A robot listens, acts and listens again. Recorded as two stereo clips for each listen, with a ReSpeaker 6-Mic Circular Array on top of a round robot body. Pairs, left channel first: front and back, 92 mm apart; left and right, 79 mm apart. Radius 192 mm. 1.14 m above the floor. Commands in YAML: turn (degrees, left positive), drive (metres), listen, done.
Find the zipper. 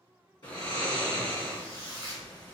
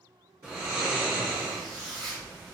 done: "Found it: a zipper, straight ahead."